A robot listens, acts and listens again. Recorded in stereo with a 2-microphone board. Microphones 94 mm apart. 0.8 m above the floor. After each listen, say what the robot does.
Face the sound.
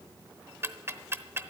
Turn 25° right.
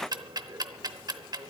Turn 125° right.
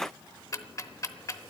Turn 40° left.
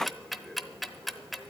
Facing the ticking.